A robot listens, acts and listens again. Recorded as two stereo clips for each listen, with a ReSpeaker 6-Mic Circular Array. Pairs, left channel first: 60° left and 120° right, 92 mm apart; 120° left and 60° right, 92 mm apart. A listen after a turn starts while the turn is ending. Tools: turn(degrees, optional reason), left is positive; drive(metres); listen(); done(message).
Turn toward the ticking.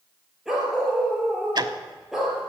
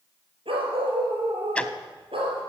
turn(degrees=-160, reason="The ticking: 160° right.")
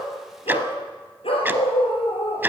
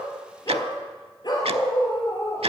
turn(degrees=-50, reason="The ticking is now 50° right.")
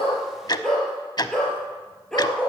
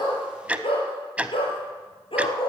turn(degrees=15, reason="The ticking is now 15° left.")
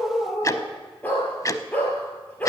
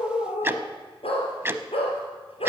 done("Found it: ticking, straight ahead.")